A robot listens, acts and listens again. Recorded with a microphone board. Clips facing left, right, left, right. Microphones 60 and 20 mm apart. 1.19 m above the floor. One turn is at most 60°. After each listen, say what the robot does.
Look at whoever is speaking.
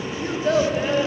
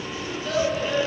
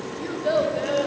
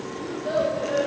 Turn 35° left.
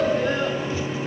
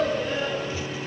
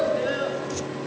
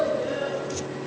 Turn 60° left.
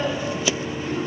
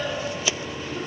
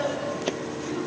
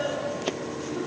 Turn 55° left.
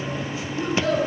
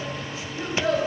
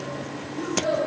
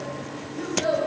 Turn 10° right.
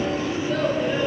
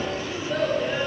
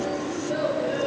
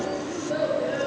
Facing the child speaking.